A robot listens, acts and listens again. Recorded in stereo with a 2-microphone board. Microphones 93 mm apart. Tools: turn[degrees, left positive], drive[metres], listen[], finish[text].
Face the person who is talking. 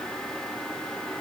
Action: listen[]
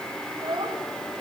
Thought: The child speaking: about 45° right or 135° right.
Action: turn[-45]
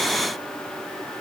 Action: listen[]
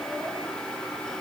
Action: listen[]
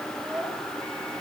Action: finish[I heard a child speaking, but can't make it out now. It was about straight ahead or 90° right.]